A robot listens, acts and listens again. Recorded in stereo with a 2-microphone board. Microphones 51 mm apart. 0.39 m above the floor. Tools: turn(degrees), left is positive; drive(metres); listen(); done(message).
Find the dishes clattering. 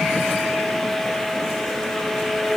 listen()
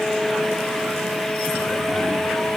listen()
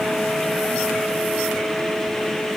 done("I can't make out dishes clattering.")